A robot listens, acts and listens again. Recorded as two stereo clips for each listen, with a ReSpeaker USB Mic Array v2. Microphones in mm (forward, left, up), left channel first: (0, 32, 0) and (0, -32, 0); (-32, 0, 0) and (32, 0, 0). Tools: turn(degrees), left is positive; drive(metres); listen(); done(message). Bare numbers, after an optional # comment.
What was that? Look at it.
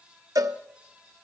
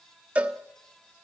# The cowbell: 65° right.
turn(-65)
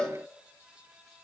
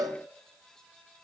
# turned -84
# The cowbell is now 15° left.
turn(15)
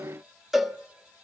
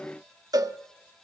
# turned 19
done("Facing the cowbell.")